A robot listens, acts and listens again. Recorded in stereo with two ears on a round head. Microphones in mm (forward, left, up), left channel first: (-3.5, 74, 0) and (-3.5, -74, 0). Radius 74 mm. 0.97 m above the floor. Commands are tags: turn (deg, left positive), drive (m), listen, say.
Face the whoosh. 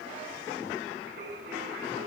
<listen/>
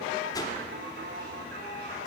<turn deg="20"/>
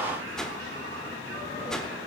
<say>Facing the whoosh, 1 to 2 m away.</say>